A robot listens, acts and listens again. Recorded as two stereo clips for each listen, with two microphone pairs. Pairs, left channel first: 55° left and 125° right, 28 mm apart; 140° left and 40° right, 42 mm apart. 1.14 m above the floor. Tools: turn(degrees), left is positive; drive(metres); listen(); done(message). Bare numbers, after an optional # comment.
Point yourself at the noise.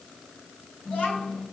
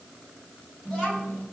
# The child speaking: 65° left.
turn(65)
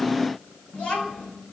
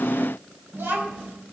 done("Found it: a child speaking, straight ahead.")